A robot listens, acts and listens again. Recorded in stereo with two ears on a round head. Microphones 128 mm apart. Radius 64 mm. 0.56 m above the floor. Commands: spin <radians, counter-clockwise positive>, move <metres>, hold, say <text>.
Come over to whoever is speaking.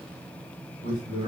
spin 1.31
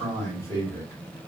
spin 0.44
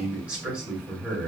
spin -0.17
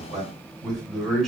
move 1.0
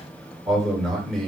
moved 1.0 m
move 1.0
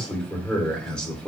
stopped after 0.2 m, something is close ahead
spin 0.17
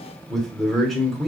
say I am next to the man speaking.